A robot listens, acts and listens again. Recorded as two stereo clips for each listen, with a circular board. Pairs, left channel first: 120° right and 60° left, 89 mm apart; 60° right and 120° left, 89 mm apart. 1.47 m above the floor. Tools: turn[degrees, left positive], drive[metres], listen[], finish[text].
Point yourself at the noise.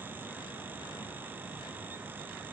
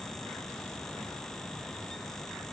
Action: listen[]
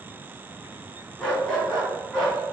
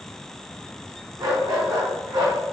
Thought: The dog barking: 155° left.
Action: turn[155]
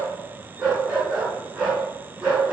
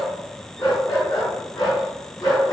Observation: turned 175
Thought: The dog barking is now 20° right.
Action: turn[-20]
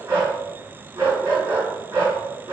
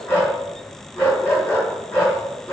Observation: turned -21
Action: finish[Found it: a dog barking, straight ahead.]